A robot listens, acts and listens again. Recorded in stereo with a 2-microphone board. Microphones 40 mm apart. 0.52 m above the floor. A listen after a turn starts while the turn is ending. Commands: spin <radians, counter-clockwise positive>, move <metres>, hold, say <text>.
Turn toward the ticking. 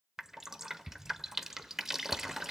spin 0.52
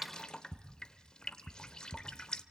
spin -0.26
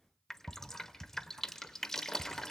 say Found it: ticking, straight ahead.